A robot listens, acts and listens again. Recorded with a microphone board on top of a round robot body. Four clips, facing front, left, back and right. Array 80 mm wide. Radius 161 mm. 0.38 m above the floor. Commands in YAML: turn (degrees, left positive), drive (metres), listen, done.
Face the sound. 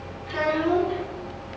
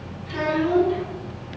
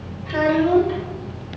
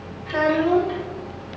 turn: -135
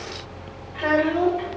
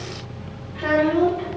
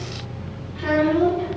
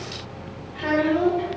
done: "Found it: a child speaking, straight ahead, 2 to 4 m away."